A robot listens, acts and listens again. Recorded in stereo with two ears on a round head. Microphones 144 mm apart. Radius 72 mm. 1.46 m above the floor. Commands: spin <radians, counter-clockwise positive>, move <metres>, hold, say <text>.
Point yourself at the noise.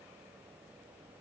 hold
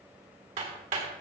spin -0.87
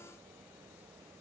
hold
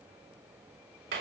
spin -1.40
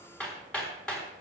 say Facing the hammering, 2 to 4 m away.